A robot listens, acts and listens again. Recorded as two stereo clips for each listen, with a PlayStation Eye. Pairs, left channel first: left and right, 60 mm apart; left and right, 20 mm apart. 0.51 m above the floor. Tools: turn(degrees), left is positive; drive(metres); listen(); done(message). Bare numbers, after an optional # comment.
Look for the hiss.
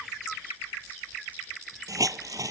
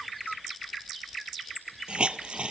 # The hiss: about 70° right or 110° right.
turn(-70)
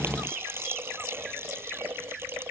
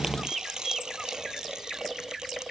# So it is at 40° right.
turn(-40)
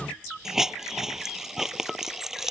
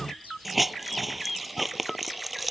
done("Found it: a hiss, straight ahead.")